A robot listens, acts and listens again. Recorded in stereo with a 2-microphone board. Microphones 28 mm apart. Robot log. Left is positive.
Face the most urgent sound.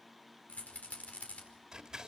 cmd idle
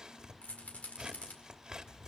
cmd idle
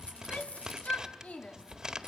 note: The shout: about 65° left or 115° left.
cmd yaw +65
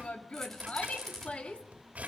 note: So it is at 50° left.
cmd yaw +50
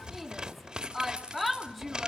end: Found it: a shout, straight ahead, 2 to 4 m away.